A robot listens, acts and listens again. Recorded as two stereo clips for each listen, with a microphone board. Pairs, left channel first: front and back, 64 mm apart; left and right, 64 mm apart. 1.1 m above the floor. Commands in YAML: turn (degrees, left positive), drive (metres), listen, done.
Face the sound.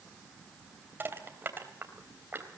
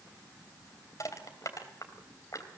turn: 125
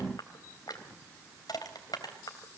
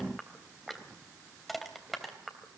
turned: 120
done: "Found it: crushing, straight ahead, 2 to 4 m away."